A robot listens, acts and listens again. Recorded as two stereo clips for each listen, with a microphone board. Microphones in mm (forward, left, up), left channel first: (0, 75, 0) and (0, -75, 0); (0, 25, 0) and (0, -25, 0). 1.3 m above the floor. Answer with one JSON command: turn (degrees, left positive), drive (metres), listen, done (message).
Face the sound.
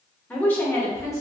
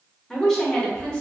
{"turn": 20}
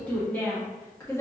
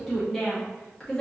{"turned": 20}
{"turn": 20}
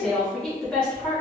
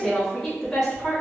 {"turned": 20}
{"turn": 30}
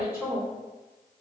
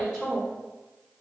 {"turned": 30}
{"turn": -15}
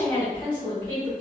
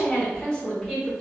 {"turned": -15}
{"turn": 10}
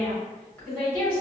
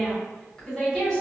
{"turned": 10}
{"done": "Facing the woman speaking, 2 to 4 m away."}